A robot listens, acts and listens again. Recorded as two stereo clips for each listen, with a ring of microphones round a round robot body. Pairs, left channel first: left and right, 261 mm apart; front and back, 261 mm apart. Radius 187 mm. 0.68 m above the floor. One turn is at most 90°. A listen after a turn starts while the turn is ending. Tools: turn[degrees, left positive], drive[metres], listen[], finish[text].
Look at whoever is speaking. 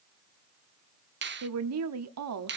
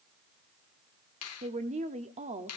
Thought: The woman speaking: 110° right.
Action: turn[-90]
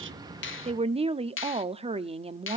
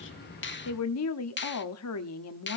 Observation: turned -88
Thought: The woman speaking is now 20° right.
Action: turn[-20]
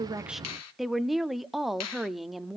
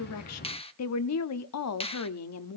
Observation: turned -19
Action: finish[Found it: a woman speaking, straight ahead, 1 to 2 m away.]